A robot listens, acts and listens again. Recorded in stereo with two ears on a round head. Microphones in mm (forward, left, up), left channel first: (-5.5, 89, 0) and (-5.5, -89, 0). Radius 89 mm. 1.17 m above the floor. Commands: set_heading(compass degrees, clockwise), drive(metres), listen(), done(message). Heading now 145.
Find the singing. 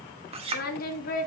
set_heading(100)
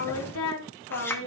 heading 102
set_heading(357)
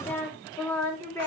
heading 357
set_heading(342)
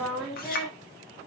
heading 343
done("Facing the singing, 2 to 4 m away.")